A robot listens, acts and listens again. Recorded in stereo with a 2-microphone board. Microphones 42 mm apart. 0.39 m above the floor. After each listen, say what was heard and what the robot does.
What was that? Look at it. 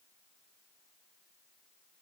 Keep listening.
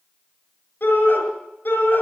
The shout: about 65° left or 115° left. Turn 65° left.
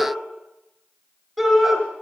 Found it: a shout, straight ahead.